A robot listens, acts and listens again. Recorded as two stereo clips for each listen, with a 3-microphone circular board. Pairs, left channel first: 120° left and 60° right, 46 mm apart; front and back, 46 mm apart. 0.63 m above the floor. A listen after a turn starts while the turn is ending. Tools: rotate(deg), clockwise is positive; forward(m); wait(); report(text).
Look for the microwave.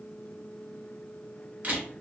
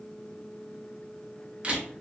wait()
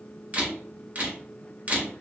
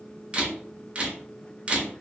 wait()
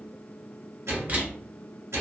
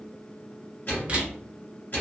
rotate(45)
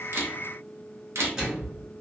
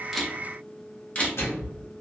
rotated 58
rotate(-10)
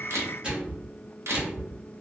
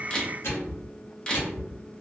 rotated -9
report("Found it: a microwave, straight ahead.")